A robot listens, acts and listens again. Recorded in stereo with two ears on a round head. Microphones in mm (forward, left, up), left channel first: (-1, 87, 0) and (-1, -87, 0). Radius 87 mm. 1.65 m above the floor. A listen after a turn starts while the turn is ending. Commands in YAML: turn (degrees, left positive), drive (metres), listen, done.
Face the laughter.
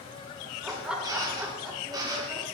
turn: -30
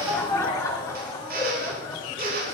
turn: 10
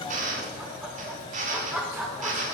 done: "Found it: laughter, straight ahead."